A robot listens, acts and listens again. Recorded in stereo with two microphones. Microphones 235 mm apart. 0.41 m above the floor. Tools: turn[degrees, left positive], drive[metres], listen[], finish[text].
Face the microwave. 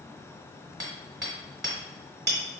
Action: listen[]
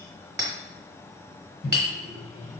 Thought: The microwave: about 50° left or 130° left.
Action: turn[50]
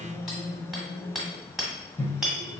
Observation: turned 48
Thought: So it is at 10° left.
Action: turn[10]
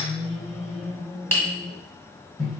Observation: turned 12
Action: finish[Found it: a microwave, straight ahead.]